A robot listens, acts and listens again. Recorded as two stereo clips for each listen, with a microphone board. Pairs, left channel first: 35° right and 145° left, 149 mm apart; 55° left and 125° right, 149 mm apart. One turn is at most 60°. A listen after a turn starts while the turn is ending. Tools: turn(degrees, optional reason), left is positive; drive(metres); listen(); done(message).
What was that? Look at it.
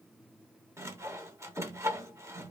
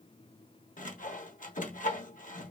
turn(degrees=60, reason="The sawing: 75° left.")
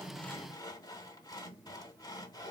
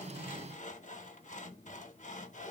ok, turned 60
turn(degrees=30, reason="The sawing is now 30° left.")
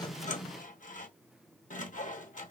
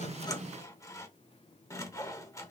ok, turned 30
turn(degrees=-10, reason="The sawing is now 10° right.")
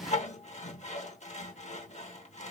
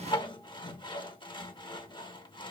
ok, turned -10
done("Found it: sawing, straight ahead, under 1 m away.")